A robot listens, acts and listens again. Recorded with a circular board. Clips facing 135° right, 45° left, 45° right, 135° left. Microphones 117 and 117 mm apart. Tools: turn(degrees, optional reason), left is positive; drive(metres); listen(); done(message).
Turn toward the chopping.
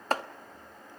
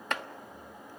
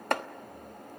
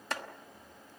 turn(degrees=-80, reason="The chopping: 80° right.")
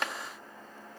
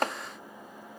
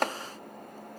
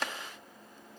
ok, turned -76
done("Facing the chopping.")